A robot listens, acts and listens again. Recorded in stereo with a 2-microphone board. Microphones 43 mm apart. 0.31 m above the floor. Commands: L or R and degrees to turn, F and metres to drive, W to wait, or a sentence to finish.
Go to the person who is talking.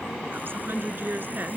R55
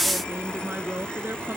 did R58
R65
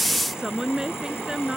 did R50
R15
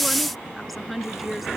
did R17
F1.0
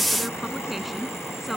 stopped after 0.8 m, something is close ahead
Something is in my way. I am facing the woman speaking but have not reached it.